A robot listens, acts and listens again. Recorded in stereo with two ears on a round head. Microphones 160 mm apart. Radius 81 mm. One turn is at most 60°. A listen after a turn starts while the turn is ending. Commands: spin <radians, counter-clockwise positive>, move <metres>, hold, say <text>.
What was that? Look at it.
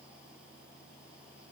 hold
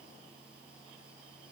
hold
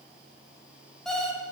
spin 0.52
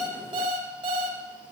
spin -0.52
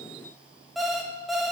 say Facing the alarm clock.